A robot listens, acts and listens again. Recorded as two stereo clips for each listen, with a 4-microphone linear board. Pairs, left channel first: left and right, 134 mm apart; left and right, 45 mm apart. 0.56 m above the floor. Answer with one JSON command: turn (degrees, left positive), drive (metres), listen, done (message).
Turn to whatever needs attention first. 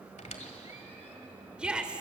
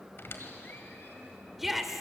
{"turn": -30}
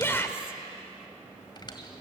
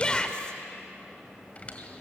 {"turn": 20}
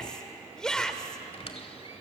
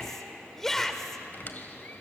{"done": "Facing the shout."}